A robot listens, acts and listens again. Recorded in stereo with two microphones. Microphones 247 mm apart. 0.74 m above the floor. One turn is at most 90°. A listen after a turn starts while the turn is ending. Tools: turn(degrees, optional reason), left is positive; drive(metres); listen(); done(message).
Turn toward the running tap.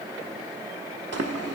turn(degrees=-90)
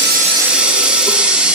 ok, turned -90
done("Found it: a running tap, straight ahead.")